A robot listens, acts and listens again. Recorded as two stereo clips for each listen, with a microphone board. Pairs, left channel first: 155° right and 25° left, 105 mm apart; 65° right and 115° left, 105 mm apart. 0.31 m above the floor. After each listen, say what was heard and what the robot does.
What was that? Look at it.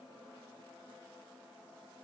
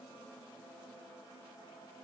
Keep listening.
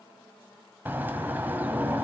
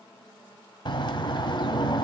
The bird: 45° right. Turn 45° right.
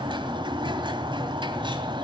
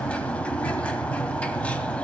The bird is now 10° left. Turn 10° left.
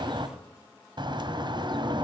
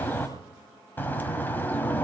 Found it: a bird, straight ahead.